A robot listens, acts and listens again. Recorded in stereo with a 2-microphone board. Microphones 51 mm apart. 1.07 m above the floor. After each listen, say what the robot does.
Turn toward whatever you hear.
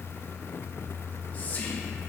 Turn 30° left.
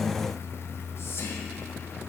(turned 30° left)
Keep listening.
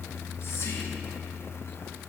Keep listening.
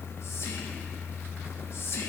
Turn 120° left.
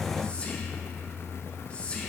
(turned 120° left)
Turn 25° left.
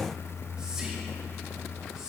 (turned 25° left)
Turn 15° right.
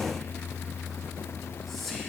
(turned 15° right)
Found it: whispering, straight ahead.